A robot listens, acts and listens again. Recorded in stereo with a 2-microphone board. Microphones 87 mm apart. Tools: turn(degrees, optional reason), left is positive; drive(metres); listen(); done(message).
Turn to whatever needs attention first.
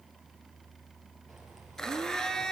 listen()
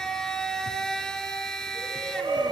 turn(degrees=-65, reason="The shout: about 65° right or 115° right.")
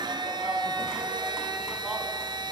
listen()
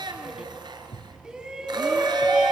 turn(degrees=-10, reason="So it is at 10° right.")
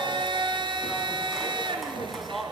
done("Found it: a shout, straight ahead.")